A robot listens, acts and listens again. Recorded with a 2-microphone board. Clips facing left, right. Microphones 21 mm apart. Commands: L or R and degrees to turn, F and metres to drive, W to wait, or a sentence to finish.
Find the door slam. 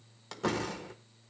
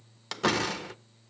R60
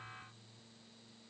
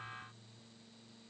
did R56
W
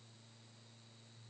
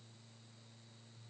I heard a door slam, but can't make it out now. It was about 5° right or 65° right.